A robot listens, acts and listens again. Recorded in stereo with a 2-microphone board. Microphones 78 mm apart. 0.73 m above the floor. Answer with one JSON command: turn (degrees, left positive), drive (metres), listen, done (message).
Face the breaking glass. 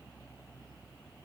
{"listen": true}
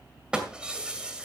{"turn": -30}
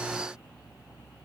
{"listen": true}
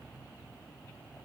{"done": "I heard breaking glass, but can't make it out now. It was about 20° left or 140° right."}